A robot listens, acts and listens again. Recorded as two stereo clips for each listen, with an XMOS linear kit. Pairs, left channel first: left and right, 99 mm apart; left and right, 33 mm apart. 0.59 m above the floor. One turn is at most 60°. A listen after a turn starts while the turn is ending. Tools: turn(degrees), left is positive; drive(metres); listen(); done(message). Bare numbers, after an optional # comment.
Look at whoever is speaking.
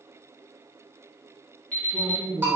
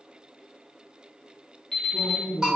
# The man speaking: about 55° right or 125° right.
turn(-55)
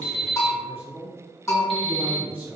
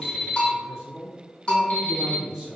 # So it is at 20° right.
turn(-20)
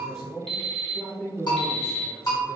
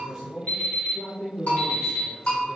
done("Found it: a man speaking, straight ahead, 1 to 2 m away.")